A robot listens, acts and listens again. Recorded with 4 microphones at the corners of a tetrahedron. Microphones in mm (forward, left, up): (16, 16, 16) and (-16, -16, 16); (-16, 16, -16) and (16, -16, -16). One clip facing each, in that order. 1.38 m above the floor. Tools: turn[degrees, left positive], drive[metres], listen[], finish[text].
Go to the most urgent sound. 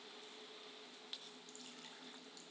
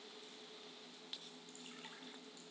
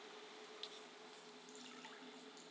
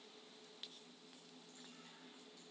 Action: listen[]
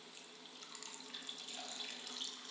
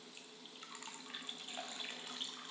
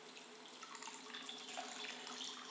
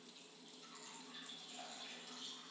Action: listen[]
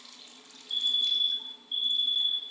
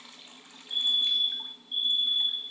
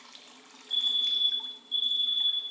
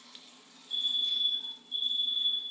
Thought: The fire alarm: 100° left.
Action: turn[100]
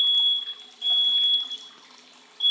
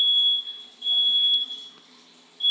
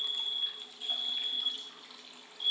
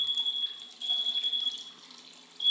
Action: drive[1.0]
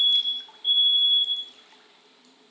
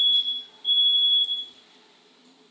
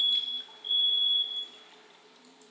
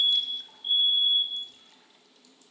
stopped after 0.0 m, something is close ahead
Action: finish[Something is in my way. I am facing the fire alarm but have not reached it.]